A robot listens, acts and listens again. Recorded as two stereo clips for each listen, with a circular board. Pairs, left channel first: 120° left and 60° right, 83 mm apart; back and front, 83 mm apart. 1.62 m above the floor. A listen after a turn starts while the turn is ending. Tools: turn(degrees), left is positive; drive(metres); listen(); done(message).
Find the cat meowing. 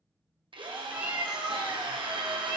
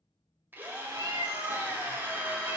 turn(degrees=10)
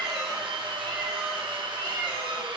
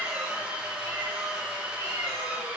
listen()
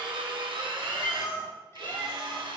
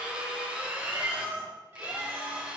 turn(degrees=70)
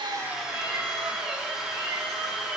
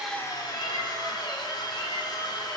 listen()
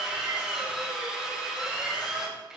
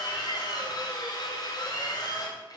listen()
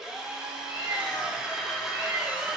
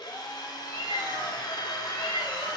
done("Found it: a cat meowing, straight ahead.")